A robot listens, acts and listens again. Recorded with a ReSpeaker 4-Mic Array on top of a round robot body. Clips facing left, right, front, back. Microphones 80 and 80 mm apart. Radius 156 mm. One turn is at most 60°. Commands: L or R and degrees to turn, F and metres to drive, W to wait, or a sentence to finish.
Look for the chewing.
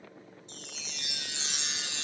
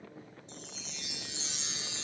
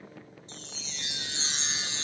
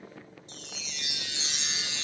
W
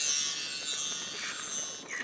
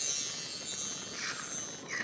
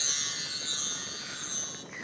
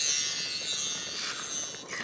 R60
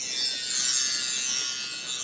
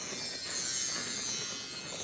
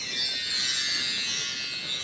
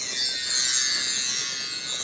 R60
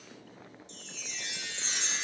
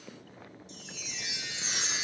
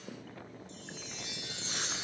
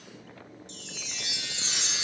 R55
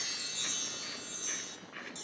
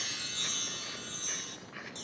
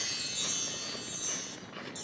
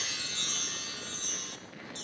Found it: chewing, straight ahead.